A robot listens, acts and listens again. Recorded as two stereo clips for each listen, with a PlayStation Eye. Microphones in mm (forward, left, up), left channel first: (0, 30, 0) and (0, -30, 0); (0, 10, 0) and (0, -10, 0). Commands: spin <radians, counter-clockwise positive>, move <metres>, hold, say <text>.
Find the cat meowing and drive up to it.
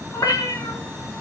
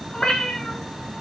spin 1.57
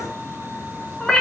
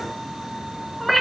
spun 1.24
spin 0.17
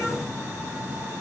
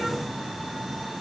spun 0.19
hold
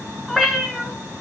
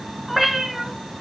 move 1.0
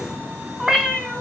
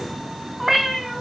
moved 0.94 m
move 1.0
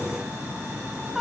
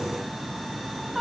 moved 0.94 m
move 1.0
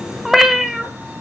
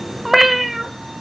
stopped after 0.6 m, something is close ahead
say Arrived at the cat meowing, straight ahead.